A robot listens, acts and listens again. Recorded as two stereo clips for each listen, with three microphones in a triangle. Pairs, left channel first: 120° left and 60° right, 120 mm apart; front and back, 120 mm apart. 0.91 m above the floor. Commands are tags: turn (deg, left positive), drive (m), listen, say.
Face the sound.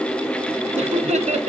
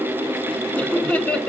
<turn deg="-80"/>
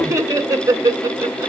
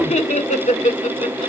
<say>Facing the laughter, 2 to 4 m away.</say>